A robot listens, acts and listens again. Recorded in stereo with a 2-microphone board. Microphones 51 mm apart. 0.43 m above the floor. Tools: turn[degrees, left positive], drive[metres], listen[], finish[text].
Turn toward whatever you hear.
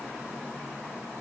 Action: listen[]
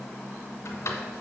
Thought: The drawer: about 70° left or 110° left.
Action: turn[70]
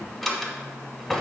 Action: finish[Found it: a drawer, straight ahead, 1 to 2 m away.]